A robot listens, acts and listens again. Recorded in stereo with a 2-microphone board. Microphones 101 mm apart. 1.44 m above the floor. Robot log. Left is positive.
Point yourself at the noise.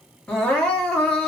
cmd yaw +30
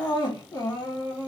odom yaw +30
note: So it is at 140° left.
cmd yaw +140
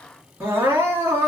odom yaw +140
note: The crying is now 30° right.
cmd yaw -30
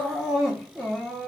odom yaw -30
end: Found it: crying, straight ahead.